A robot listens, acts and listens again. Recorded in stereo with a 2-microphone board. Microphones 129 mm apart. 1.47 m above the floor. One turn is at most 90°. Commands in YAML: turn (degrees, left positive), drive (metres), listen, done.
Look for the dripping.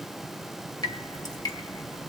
turn: 30
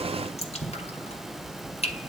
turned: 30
turn: 90
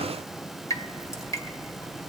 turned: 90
turn: 30
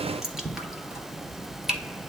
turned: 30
done: "Found it: dripping, straight ahead, 2 to 4 m away."